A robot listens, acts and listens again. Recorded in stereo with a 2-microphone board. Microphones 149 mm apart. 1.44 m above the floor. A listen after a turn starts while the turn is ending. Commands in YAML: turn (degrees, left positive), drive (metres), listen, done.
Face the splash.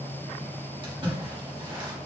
turn: -35
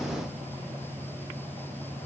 listen: true
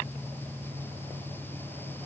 done: "I heard a splash, but can't make it out now. It was about straight ahead or 110° right."